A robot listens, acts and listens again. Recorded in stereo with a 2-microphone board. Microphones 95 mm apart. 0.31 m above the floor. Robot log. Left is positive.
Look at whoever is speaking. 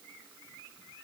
cmd idle
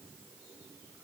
cmd idle
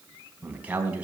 note: The man speaking: about 15° right or 165° right.
cmd yaw -15
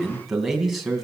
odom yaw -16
end: Facing the man speaking.